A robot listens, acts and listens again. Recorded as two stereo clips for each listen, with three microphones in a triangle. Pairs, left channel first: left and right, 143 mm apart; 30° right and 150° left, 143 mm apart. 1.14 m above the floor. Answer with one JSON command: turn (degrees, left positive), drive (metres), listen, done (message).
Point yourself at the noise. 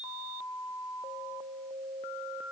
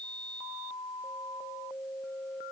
{"listen": true}
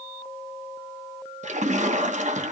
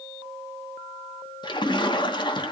{"turn": -80}
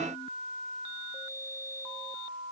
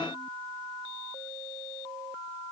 {"done": "Facing where the splash came from. I can't hear it now."}